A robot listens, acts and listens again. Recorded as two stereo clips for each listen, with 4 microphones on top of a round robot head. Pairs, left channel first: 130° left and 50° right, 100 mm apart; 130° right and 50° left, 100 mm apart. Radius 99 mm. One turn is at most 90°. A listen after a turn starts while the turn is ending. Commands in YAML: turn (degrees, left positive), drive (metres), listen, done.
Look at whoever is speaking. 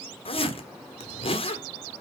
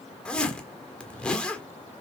listen: true
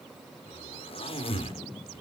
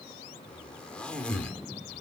listen: true
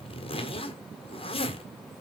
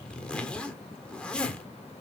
done: "I can't make out anyone speaking, only a zipper."